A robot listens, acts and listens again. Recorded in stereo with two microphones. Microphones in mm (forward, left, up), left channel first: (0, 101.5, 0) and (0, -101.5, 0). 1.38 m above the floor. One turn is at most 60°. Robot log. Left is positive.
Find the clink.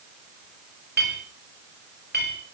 note: The clink: about 55° right or 125° right.
cmd yaw -55
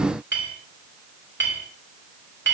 note: So it is at 70° right.
cmd yaw -60
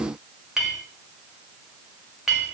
end: Facing the clink, over 4 m away.